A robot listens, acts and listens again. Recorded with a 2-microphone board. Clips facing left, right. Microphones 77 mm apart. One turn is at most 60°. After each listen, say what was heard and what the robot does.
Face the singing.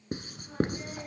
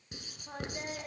Turn 60° right.
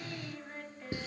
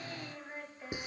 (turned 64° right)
So it is at 15° right. Turn 15° right.
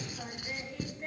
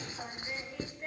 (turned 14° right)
Facing the singing, 1 to 2 m away.